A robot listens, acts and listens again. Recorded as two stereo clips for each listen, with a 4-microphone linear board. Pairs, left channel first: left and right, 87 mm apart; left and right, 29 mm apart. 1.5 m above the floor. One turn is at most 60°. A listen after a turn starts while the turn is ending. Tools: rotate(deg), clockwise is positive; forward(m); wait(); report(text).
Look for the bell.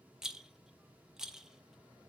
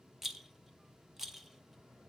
wait()
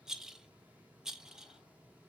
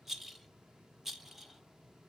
wait()
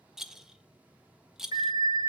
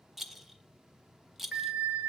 rotate(50)
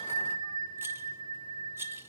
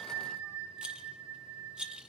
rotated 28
rotate(60)
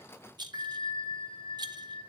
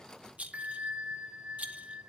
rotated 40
rotate(55)
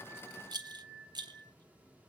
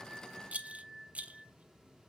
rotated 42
rotate(15)
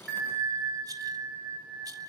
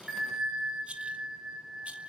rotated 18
report("Found it: a bell, straight ahead.")